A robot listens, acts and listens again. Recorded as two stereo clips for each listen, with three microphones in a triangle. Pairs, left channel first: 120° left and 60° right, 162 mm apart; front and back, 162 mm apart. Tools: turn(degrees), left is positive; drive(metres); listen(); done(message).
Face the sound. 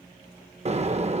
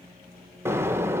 turn(degrees=-105)
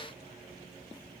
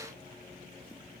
done("Facing where the explosion came from. I can't hear it now.")